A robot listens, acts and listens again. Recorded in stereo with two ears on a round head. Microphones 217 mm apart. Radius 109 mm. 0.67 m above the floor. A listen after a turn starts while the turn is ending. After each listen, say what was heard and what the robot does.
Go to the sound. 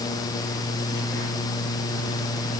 Keep listening.
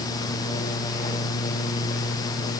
Keep listening.
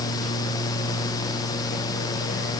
I can't make out anything to turn to.